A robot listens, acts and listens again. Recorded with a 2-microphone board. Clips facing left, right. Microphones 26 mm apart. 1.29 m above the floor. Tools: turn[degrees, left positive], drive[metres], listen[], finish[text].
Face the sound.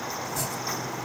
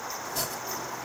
Thought: The chopping: about 60° right or 120° right.
Action: turn[-60]
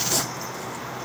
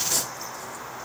Action: listen[]
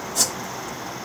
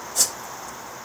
Action: finish[Found it: chopping, straight ahead.]